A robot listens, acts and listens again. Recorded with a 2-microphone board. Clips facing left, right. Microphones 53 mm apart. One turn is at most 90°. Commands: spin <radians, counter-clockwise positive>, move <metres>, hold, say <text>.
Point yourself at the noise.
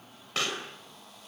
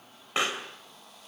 spin -0.44
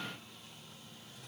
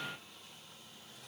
hold
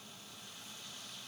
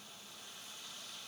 say I heard a pop, but can't make it out now. It was about straight ahead or 130° right.